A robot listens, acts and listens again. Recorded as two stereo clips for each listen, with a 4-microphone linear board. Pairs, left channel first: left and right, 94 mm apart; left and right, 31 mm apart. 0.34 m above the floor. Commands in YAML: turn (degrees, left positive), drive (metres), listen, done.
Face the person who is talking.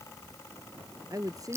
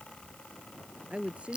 turn: -35
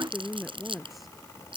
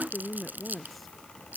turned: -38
done: "Facing the woman speaking."